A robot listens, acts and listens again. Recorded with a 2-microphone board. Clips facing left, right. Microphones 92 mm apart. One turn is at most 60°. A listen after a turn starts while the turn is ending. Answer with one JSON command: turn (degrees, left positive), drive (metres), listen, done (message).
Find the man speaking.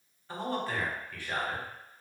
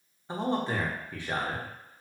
{"turn": -20}
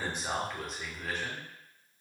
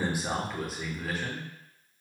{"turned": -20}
{"done": "Found it: a man speaking, straight ahead."}